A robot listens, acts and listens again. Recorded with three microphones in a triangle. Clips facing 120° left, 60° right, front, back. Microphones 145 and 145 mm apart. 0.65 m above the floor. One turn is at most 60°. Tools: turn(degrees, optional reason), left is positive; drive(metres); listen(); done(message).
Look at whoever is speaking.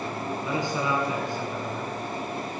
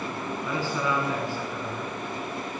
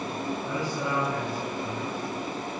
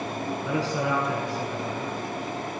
turn(degrees=-60, reason="The man speaking: 170° right.")
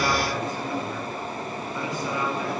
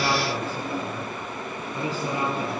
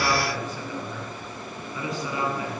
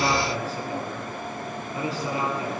turn(degrees=-60, reason="The man speaking is now 120° right.")
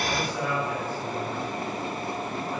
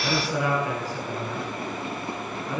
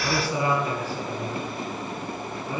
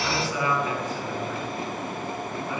turn(degrees=-60, reason="The man speaking is now 60° right.")
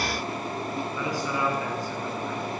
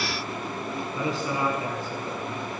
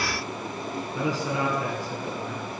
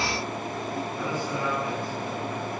done("Found it: a man speaking, straight ahead, over 4 m away.")